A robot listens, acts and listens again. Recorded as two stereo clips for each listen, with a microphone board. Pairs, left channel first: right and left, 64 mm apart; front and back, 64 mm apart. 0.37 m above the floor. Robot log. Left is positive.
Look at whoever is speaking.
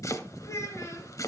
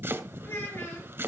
note: The child speaking: 50° right.
cmd yaw -50
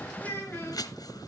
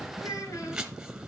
note: The child speaking is now 30° right.
cmd yaw -30
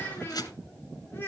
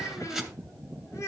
note: The child speaking is now 35° right.
cmd yaw -35
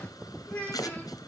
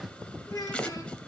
note: The child speaking is now 20° right.
cmd yaw -20
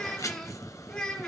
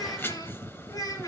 note: The child speaking is now 15° right.
cmd yaw -15
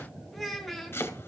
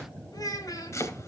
end: Facing the child speaking, 2 to 4 m away.